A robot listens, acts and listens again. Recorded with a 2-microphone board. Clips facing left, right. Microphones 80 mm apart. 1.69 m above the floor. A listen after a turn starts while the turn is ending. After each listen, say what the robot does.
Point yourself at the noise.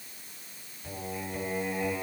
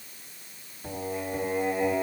Turn 65° right.
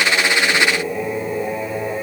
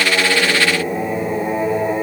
Turn 35° right.
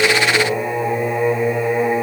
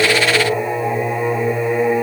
Turn 15° left.
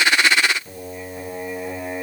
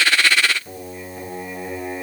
Facing the singing, 2 to 4 m away.